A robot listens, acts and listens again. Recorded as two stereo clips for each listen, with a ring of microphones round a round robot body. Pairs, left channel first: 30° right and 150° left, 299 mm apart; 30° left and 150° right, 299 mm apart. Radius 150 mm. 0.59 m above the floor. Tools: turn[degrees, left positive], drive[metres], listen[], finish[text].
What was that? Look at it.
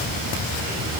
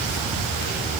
Action: listen[]
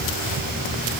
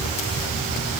Action: listen[]
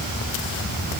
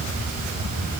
Action: finish[I can't make out anything to turn to.]